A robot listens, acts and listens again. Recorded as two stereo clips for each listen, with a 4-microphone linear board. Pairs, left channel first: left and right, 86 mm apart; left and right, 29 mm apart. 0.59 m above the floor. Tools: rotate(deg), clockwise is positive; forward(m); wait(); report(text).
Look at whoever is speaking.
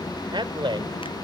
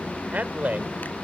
rotate(70)
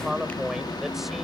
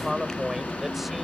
report("Found it: a man speaking, straight ahead.")